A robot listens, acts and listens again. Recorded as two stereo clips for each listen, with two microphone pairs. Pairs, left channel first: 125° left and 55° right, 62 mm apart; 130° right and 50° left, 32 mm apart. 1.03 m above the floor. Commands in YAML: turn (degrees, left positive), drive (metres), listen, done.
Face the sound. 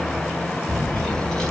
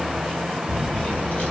turn: -160
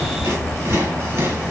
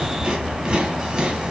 turn: -15
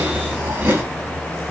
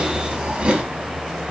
done: "Found it: chewing, straight ahead, 1 to 2 m away."